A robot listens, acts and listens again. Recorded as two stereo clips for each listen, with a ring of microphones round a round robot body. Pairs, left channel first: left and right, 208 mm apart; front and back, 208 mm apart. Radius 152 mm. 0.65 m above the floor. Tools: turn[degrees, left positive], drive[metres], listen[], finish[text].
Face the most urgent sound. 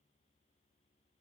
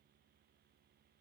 Action: listen[]
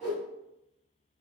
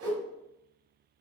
Action: listen[]
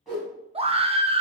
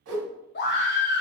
Thought: The scream: 30° right.
Action: turn[-30]
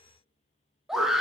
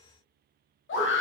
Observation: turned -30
Action: finish[Facing the scream.]